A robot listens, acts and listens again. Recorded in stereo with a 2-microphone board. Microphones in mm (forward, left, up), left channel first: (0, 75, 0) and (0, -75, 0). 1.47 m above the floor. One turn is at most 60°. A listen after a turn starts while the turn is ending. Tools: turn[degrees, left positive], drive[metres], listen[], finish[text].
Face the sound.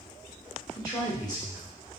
Thought: The man speaking: about 25° left or 155° left.
Action: turn[25]
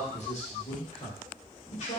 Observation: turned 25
Thought: So it is at 130° left.
Action: turn[60]
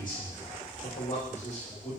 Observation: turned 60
Thought: The man speaking is now 50° left.
Action: turn[50]
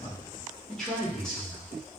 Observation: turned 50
Action: finish[Facing the man speaking.]